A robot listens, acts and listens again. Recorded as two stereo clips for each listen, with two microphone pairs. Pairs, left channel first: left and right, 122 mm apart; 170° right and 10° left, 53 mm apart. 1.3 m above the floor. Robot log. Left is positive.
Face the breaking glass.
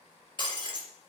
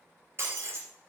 note: The breaking glass: 40° left.
cmd yaw +40
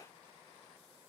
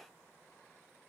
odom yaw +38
end: Facing where the breaking glass came from. I can't hear it now.